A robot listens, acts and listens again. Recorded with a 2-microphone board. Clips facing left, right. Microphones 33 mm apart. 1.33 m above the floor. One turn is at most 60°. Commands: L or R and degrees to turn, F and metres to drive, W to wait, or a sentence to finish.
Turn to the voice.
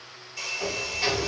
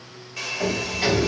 W
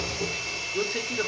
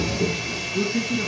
L60
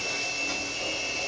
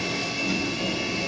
W
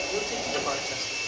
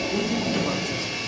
W
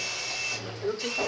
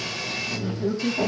L35
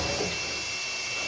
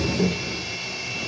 W
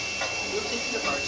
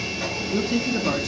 L10
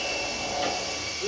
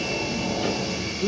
Facing the man speaking, under 1 m away.